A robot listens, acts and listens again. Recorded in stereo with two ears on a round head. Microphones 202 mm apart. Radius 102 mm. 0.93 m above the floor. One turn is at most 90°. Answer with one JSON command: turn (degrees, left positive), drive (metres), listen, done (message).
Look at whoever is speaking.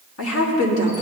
{"turn": 65}
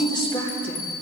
{"turn": 25}
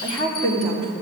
{"turn": 30}
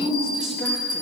{"done": "Facing the woman speaking, 2 to 4 m away."}